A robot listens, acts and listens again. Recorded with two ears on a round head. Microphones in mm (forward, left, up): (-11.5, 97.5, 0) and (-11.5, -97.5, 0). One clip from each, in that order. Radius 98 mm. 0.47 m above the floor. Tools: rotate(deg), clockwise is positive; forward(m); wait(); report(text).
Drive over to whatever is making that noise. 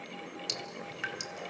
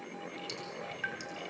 rotate(-30)
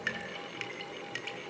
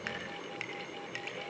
forward(1.0)
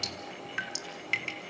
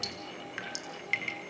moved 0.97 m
forward(1.0)
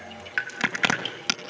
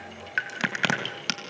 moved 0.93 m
forward(1.0)
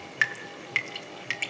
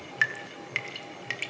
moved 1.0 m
rotate(-10)
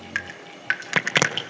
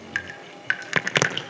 forward(1.0)
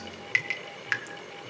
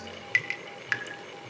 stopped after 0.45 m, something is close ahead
report("Arrived at the dripping, straight ahead.")